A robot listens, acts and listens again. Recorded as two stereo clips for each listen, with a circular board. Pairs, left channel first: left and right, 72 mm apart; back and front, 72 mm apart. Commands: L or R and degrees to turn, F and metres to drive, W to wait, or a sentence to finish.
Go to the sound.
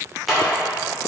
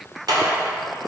F1.0
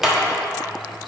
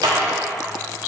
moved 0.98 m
R10
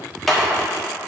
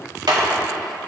F1.0
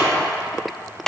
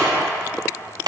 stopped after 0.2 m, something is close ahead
Arrived at the clap, straight ahead.